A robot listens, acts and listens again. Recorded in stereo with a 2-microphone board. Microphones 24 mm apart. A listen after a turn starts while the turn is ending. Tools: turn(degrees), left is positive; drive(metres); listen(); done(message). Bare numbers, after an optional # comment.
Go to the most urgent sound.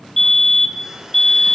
turn(30)
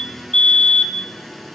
# So it is at 130° left.
turn(130)
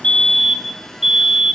# The fire alarm is now 20° right.
turn(-20)
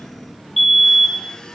drive(1.0)
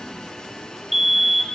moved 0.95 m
# The fire alarm is now 15° right.
turn(-15)
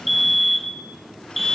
drive(1.0)
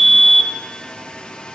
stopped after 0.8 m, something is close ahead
done("Arrived at the fire alarm, straight ahead.")